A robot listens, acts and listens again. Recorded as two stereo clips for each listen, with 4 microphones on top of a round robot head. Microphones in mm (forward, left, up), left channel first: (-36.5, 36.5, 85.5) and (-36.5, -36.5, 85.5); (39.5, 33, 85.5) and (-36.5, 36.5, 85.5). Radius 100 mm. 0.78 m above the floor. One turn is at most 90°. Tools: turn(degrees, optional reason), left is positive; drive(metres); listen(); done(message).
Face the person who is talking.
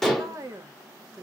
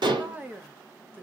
turn(degrees=-90, reason="The woman speaking: 125° right.")
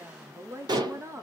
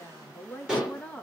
turn(degrees=-75, reason="The woman speaking is now 75° right.")
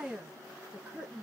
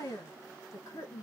turn(degrees=-25, reason="The woman speaking is now 25° right.")
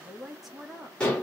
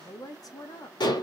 done("Facing the woman speaking, 1 to 2 m away.")